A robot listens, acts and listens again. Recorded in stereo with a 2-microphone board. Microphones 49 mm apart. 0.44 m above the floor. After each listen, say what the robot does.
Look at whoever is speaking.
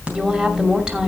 Turn 15° right.
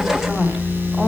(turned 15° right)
Keep listening.
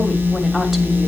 Keep listening.
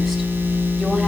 I heard a woman speaking, but can't make it out now. It was about straight ahead or 150° right.